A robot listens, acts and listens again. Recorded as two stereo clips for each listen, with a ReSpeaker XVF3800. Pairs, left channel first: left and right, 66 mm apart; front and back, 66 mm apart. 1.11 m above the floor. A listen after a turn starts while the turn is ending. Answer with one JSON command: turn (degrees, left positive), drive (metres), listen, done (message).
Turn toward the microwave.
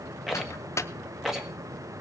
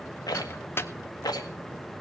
{"turn": 50}
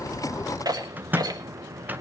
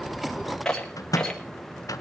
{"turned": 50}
{"turn": -30}
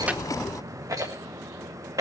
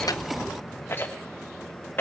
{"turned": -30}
{"listen": true}
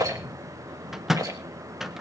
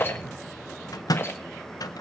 {"done": "Found it: a microwave, straight ahead, under 1 m away."}